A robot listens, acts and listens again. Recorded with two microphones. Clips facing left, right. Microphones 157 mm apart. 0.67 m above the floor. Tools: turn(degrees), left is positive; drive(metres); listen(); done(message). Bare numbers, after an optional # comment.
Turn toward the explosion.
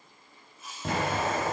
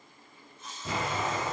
# The explosion: about 70° left or 110° left.
turn(70)
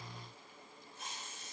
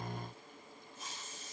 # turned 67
listen()
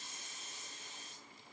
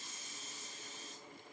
done("I heard an explosion, but can't make it out now. It was about 5° left or 45° left.")